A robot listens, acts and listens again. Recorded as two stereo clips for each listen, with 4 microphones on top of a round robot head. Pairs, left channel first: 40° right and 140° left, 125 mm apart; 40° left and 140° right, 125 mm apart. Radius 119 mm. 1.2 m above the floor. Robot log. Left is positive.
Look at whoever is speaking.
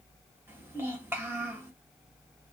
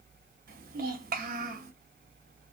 note: The child speaking: 145° right.
cmd yaw -145
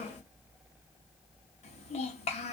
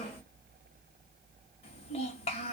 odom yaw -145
end: Facing the child speaking, 1 to 2 m away.